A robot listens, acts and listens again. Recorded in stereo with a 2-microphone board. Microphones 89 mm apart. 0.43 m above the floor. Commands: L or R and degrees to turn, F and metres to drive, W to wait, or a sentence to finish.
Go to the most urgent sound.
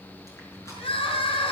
L90
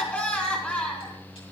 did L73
L15
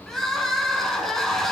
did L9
F1.0
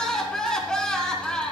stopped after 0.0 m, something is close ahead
Something is in my way. I am facing the crying but have not reached it.